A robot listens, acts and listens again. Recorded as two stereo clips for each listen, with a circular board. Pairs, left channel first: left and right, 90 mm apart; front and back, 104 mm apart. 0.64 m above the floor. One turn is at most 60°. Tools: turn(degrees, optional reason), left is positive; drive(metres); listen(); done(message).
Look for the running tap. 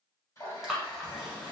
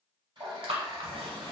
turn(degrees=60, reason="The running tap: 140° left.")
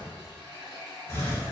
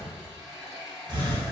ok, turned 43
turn(degrees=60, reason="The running tap is now 100° left.")
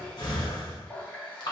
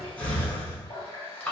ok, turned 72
turn(degrees=25, reason="The running tap is now 25° left.")
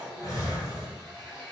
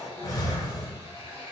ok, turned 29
done("Found it: a running tap, straight ahead, 1 to 2 m away.")